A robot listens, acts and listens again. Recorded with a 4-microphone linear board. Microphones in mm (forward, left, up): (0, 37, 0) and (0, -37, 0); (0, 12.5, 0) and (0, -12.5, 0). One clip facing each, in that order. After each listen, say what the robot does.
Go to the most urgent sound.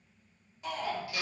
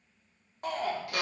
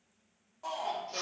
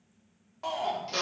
Turn 60° right.
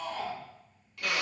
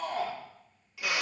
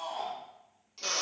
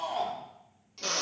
Turn 65° right.
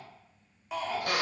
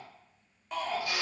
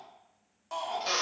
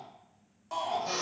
Drive 1.0 m forward.
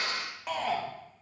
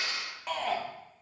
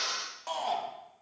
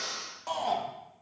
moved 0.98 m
Drive 1.0 m forward.
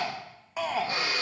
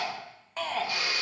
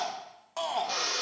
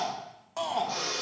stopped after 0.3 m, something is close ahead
Turn 10° left.
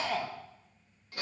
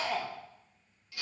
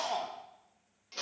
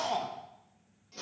Arrived at the shout, straight ahead.